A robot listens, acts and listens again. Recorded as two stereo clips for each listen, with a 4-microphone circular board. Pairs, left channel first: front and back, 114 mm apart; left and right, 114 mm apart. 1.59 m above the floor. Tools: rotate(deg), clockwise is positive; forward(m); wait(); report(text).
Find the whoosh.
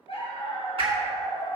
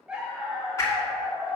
rotate(-150)
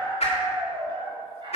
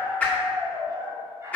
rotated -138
rotate(-10)
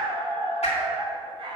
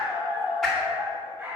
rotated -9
report("Found it: a whoosh, straight ahead, 2 to 4 m away.")